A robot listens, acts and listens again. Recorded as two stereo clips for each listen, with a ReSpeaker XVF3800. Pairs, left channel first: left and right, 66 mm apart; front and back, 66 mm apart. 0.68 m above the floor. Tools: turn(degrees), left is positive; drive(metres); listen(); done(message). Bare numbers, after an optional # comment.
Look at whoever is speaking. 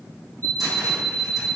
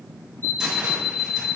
listen()
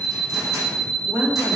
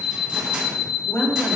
# The woman speaking: 35° right.
turn(-35)
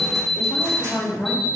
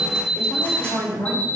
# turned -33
done("Found it: a woman speaking, straight ahead.")